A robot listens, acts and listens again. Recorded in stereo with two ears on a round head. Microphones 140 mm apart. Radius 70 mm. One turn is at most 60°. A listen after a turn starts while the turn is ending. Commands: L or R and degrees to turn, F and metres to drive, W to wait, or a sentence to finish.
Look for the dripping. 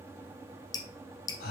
L25
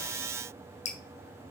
L60
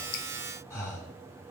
L60
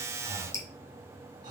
L20
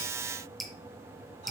Found it: dripping, straight ahead, 1 to 2 m away.